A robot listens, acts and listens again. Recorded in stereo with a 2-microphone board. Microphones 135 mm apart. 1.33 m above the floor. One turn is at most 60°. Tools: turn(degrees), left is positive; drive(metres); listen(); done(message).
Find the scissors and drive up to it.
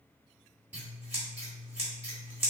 turn(degrees=-15)
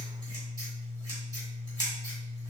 turn(degrees=-60)
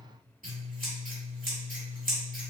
turn(degrees=-60)
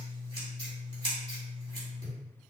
turn(degrees=-35)
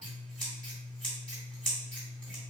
drive(metres=1.0)
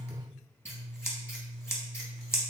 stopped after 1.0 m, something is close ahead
turn(degrees=20)
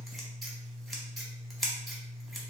done("I am next to the scissors.")